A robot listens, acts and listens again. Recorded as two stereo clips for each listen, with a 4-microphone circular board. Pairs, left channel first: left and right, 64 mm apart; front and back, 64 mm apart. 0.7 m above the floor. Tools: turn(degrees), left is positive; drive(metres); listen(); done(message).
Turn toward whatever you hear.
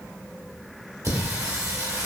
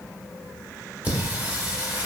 turn(degrees=-115)
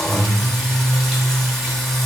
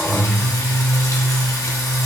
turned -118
done("Found it: singing, straight ahead.")